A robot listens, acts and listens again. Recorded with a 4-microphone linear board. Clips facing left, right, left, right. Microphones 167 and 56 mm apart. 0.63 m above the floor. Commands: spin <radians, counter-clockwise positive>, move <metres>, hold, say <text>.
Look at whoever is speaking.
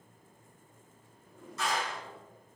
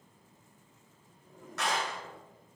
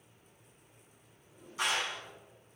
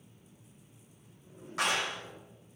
hold
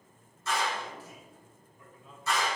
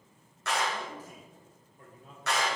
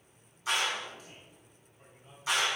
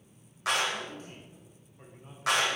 spin -0.87
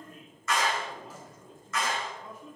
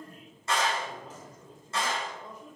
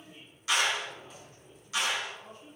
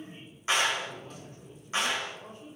spin -0.70
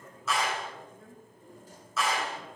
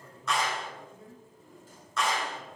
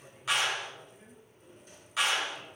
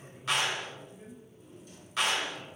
spin -0.17
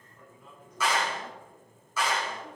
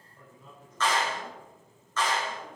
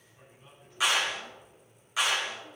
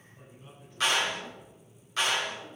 say Found it: a man speaking, straight ahead, 2 to 4 m away.